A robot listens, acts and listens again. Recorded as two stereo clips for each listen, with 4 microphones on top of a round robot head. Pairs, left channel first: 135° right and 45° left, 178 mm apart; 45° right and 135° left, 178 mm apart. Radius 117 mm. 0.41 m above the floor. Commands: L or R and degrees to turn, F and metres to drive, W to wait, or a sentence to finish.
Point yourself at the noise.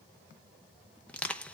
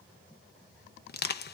R55
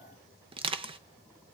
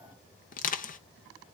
R10
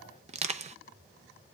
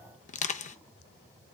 Facing the crushing, under 1 m away.